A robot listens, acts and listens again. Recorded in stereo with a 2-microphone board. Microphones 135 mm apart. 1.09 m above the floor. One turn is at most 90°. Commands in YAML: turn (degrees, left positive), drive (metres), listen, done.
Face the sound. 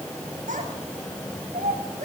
turn: -90
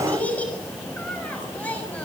turn: 10
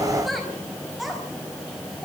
done: "Found it: a child speaking, straight ahead, over 4 m away."